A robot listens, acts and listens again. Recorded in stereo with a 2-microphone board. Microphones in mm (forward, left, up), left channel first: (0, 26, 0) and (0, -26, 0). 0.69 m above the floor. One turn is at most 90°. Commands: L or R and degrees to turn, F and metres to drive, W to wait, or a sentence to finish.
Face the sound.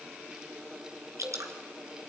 R90
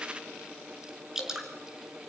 R10
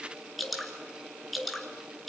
Facing the dripping.